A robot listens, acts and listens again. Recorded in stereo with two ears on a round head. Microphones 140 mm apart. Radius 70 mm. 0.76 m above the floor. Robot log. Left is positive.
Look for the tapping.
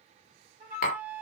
note: The tapping: about 60° left or 120° left.
cmd yaw +60
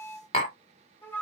note: So it is at 45° left.
cmd yaw +45
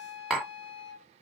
end: Found it: tapping, straight ahead.